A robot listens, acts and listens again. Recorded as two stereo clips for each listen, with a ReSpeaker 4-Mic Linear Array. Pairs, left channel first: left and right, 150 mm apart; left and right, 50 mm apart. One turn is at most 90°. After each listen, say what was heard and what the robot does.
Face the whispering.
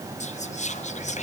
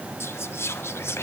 The whispering: about 50° left or 130° left. Turn 50° left.
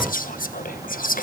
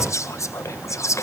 So it is at 75° left. Turn 75° left.
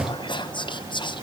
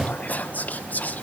The whispering is now 35° left. Turn 35° left.
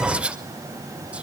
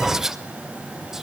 The whispering is now 10° right. Turn 10° right.
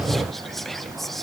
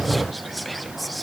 Facing the whispering, 1 to 2 m away.